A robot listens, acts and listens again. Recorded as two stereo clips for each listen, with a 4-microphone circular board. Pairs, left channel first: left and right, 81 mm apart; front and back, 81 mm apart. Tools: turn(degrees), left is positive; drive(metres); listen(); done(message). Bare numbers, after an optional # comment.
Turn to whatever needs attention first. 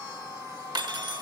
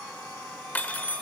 listen()
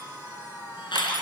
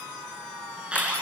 # The alarm: 105° left.
turn(105)
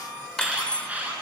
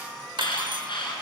# The alarm is now 20° right.
turn(-20)
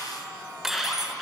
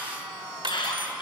done("Found it: an alarm, straight ahead, over 4 m away.")